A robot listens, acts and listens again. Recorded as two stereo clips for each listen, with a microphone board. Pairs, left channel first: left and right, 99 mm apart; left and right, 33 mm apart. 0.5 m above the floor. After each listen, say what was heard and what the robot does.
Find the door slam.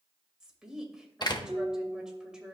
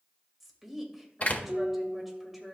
The door slam: about 45° left or 135° left. Turn 45° left.
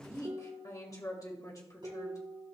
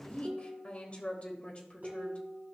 Keep listening.
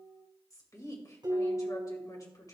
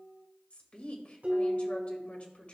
I heard a door slam, but can't make it out now. It was about straight ahead or 90° left.